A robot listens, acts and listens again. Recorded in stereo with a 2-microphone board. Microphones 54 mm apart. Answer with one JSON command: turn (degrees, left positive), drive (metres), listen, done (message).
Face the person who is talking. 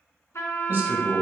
{"turn": -45}
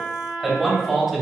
{"done": "Found it: a man speaking, straight ahead."}